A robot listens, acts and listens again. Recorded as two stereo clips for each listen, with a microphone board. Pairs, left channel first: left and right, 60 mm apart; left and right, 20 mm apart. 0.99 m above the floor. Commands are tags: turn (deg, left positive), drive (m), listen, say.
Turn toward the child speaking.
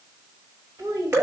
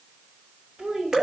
<turn deg="-90"/>
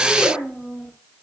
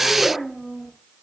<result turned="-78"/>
<turn deg="-10"/>
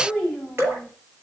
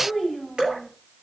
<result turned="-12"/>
<turn deg="10"/>
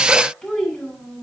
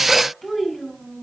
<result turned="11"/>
<say>Facing the child speaking, over 4 m away.</say>